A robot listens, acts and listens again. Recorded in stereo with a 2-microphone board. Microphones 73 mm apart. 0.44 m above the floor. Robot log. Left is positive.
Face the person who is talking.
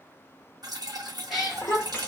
note: The child speaking: about 25° left or 155° left.
cmd yaw +25
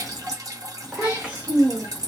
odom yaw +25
note: So it is at 20° right.
cmd yaw -20
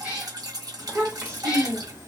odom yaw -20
note: The child speaking is now 40° right.
cmd yaw -40
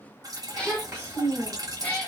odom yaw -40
note: The child speaking is now 25° right.
cmd yaw -25
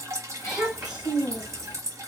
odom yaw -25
note: The child speaking is now 10° right.
cmd yaw -10
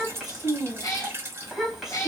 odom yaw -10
end: Found it: a child speaking, straight ahead.